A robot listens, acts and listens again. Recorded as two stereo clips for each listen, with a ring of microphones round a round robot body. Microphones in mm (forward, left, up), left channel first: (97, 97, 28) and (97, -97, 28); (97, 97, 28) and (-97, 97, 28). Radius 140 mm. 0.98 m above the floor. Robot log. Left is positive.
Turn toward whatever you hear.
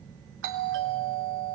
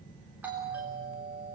note: The doorbell: 95° right.
cmd yaw -95
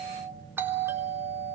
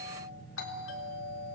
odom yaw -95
note: The doorbell is now 10° right.
cmd yaw -10
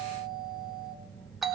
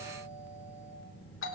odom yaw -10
end: Facing the doorbell.